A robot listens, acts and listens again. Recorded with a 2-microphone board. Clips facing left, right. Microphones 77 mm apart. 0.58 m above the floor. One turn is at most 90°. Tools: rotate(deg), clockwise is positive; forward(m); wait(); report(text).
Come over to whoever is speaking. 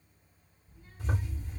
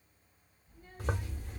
rotate(50)
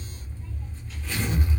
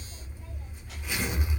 wait()
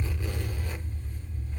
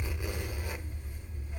wait()
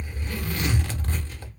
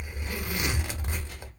rotate(80)
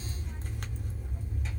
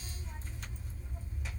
wait()
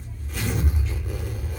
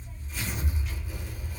wait()
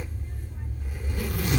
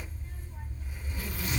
report("I heard a child speaking from this way, but can't make it out now. I did not reach it.")